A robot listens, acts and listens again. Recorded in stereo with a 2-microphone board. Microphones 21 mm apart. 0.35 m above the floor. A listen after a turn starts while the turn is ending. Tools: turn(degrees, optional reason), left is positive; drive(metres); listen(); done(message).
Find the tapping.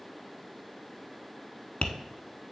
turn(degrees=90)
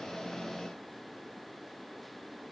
listen()
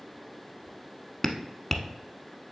done("Facing the tapping.")